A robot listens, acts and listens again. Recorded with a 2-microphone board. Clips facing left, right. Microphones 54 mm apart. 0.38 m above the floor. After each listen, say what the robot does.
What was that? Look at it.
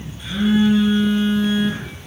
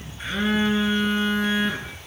Turn 35° right.
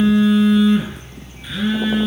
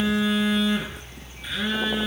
Facing the phone buzzing.